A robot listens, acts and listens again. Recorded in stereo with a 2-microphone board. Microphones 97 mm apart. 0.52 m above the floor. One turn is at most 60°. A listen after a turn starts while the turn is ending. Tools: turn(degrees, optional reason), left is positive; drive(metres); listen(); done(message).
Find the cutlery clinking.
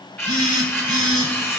turn(degrees=25, reason="The cutlery clinking: about 25° left or 155° left.")
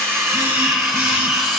done("Found it: cutlery clinking, straight ahead, 1 to 2 m away.")